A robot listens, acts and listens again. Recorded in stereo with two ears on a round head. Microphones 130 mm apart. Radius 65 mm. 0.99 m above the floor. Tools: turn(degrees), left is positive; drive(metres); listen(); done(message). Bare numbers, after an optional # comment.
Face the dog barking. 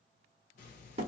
listen()
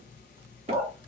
turn(30)
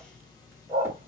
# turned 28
# So it is at 20° right.
turn(-20)
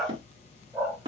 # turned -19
done("Facing the dog barking, 1 to 2 m away.")